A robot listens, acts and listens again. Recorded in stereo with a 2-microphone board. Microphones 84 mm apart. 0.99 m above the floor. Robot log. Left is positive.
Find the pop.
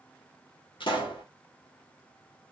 cmd yaw +90
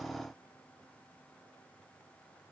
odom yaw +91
end: I heard a pop from this way, but can't make it out now.